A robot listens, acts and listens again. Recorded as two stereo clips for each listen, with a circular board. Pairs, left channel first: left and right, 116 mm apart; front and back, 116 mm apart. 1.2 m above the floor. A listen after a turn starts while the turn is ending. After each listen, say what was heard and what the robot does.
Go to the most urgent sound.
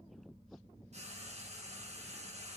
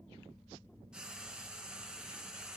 Keep listening.
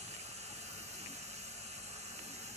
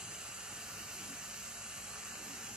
Keep listening.
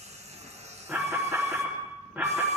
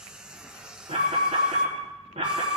The alarm: 170° right. Turn 170° right.
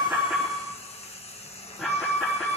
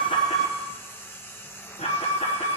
Drive 1.0 m forward.
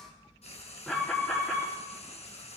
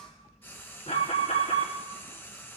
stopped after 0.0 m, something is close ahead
Something is in my way. I am facing the alarm but have not reached it.